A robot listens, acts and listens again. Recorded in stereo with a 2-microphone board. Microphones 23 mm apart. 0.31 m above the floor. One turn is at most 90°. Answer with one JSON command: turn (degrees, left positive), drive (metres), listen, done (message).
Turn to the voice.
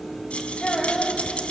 {"turn": 30}
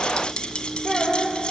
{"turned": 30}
{"done": "Found it: a child speaking, straight ahead."}